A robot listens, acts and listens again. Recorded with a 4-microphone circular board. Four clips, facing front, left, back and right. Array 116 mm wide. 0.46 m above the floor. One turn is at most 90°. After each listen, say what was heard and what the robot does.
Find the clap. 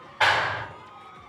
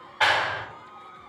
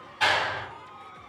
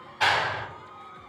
The clap: 25° left. Turn 25° left.
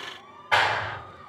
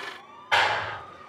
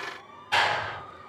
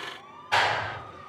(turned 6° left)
The clap is now 20° left. Turn 20° left.
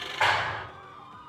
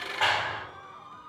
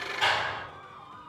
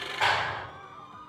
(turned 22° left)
Found it: a clap, straight ahead, 1 to 2 m away.